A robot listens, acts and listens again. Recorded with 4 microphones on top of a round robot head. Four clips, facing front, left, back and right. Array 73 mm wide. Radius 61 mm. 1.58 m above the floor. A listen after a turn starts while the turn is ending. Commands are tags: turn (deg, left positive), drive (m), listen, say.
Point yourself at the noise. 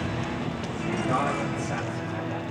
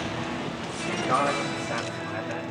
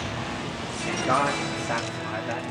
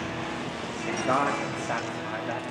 <turn deg="-140"/>
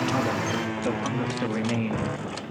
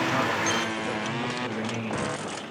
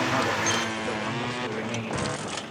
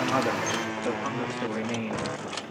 <turn deg="-30"/>
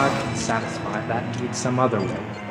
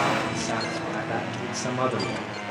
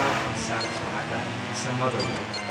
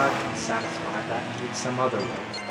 <say>Facing the man speaking.</say>